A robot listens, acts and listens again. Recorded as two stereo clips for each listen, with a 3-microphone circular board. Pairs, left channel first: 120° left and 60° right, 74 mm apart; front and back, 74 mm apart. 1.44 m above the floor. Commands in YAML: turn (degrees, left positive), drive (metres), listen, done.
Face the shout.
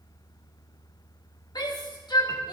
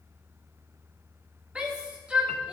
turn: 105
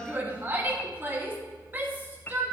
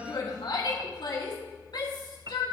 done: "Found it: a shout, straight ahead, 2 to 4 m away."